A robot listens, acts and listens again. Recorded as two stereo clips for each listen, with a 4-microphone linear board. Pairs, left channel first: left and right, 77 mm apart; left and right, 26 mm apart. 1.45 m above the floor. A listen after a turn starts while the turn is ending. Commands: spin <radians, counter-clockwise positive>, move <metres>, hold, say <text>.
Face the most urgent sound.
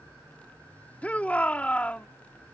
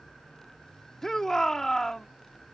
spin 0.35
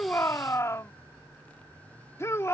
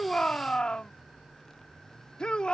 spin 2.44
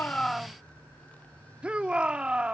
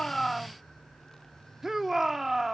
spin -0.26
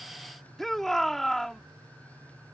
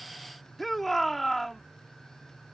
say Found it: a shout, straight ahead.